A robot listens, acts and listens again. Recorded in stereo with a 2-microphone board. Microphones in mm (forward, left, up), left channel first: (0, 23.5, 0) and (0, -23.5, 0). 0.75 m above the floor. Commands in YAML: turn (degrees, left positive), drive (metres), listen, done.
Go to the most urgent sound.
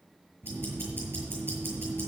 listen: true
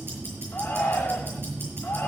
turn: 35
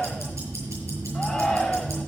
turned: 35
drive: 1.0
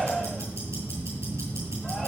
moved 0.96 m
drive: 1.0
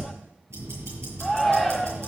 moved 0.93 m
drive: 1.0
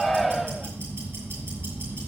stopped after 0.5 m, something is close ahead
done: "I am next to the shout."